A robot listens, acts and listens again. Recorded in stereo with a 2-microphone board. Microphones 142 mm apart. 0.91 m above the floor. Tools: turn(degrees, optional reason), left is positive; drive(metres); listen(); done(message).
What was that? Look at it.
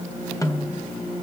turn(degrees=25, reason="The snare drum: about 25° left or 155° left.")
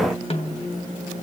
turn(degrees=135, reason="So it is at 135° left.")
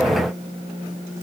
listen()
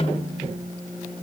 turn(degrees=45, reason="The snare drum is now 45° left.")
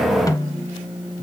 turn(degrees=25, reason="The snare drum is now 25° left.")
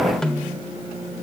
done("Facing the snare drum, 1 to 2 m away.")